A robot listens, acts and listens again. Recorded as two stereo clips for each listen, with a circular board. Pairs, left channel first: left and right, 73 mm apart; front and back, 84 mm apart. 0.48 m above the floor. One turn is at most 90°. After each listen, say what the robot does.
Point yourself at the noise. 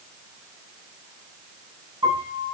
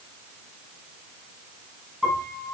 Turn 90° right.
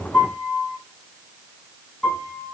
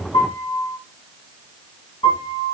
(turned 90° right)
Turn 15° left.
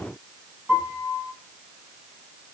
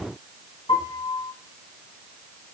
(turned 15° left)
Found it: a piano, straight ahead.